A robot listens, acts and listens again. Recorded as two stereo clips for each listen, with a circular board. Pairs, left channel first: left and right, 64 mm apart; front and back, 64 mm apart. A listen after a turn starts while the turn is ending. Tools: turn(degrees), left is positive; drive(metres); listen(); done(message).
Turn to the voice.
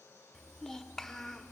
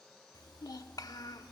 done("Found it: a child speaking, straight ahead.")